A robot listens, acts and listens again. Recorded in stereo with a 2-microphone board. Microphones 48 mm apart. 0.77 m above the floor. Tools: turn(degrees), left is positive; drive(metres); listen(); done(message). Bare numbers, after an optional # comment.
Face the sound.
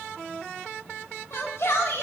# The shout: about 65° left or 115° left.
turn(65)
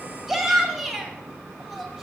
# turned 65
done("Found it: a shout, straight ahead, 2 to 4 m away.")